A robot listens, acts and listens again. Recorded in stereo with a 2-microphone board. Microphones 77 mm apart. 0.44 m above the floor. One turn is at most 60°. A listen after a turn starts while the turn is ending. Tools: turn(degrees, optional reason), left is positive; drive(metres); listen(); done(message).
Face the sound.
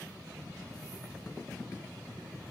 listen()
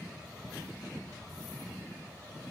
listen()
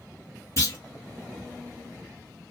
turn(degrees=45, reason="The clunk: about 45° left or 135° left.")
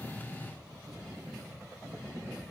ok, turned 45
listen()
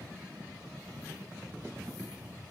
done("I heard a clunk, but can't make it out now. It was about straight ahead or 90° left.")